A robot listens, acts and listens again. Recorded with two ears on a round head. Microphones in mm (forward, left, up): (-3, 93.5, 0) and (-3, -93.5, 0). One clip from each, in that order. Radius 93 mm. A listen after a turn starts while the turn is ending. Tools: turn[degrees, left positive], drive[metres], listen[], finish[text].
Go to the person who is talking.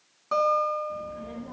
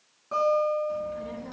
Action: turn[-90]
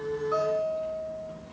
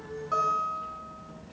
Action: drive[1.0]
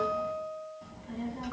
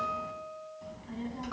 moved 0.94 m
Thought: The child speaking is now 10° right.
Action: turn[-10]
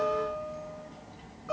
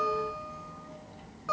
Action: drive[1.0]
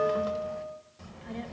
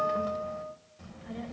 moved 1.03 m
Thought: The child speaking is now 10° left.
Action: turn[10]
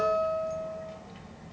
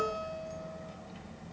Action: drive[1.0]
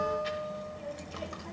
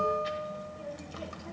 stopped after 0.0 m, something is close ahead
Thought: The child speaking is now 10° left.
Action: turn[10]
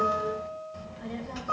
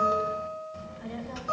Action: finish[Arrived at the child speaking, straight ahead.]